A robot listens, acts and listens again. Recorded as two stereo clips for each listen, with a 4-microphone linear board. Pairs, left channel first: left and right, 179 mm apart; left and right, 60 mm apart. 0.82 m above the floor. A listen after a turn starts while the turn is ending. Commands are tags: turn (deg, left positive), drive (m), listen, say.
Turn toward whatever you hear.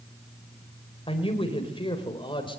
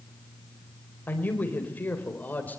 <turn deg="25"/>
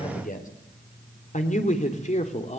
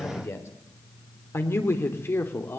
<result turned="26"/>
<turn deg="40"/>
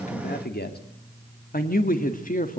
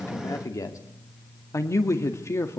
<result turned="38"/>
<turn deg="130"/>
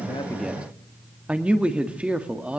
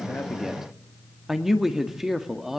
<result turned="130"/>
<say>Facing the man speaking.</say>